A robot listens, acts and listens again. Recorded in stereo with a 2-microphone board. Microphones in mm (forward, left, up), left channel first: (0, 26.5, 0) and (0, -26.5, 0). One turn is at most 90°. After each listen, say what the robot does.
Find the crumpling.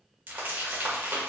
Turn 40° right.
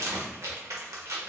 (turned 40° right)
Turn 90° right.
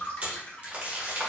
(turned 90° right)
Turn 25° right.
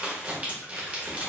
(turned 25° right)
Turn 25° right.
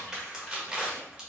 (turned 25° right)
Turn 15° right.
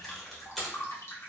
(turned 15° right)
Facing the crumpling, 1 to 2 m away.